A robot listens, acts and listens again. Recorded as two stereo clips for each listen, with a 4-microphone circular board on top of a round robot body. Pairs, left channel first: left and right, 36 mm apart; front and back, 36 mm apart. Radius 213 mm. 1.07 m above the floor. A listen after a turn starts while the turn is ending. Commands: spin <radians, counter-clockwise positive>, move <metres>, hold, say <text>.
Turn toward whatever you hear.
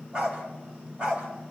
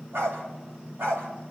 spin -2.79
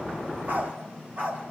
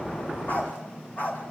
spin -0.79
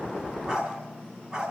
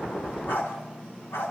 spin -0.26
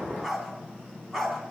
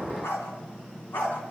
say Facing the dog barking.